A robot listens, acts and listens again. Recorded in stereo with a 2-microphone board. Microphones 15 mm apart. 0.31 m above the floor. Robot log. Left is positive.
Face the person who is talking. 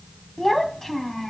note: The child speaking: about 25° left or 155° left.
cmd yaw +25
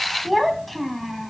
end: Facing the child speaking, 2 to 4 m away.